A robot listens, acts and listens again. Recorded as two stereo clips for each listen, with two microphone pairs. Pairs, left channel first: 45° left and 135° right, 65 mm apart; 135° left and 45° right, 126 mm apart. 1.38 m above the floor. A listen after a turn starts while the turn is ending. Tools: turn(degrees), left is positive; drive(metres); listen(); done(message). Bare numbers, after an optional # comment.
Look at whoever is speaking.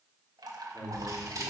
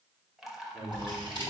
# The man speaking: 30° left.
turn(30)
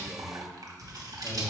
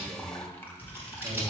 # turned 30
listen()
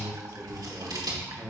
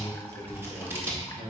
# The man speaking is now 30° right.
turn(-30)
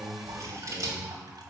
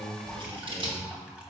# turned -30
listen()
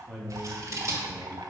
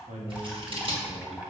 # The man speaking is now 35° right.
turn(-35)
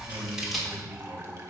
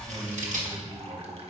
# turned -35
listen()
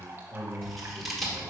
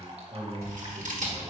done("Facing the man speaking, 1 to 2 m away.")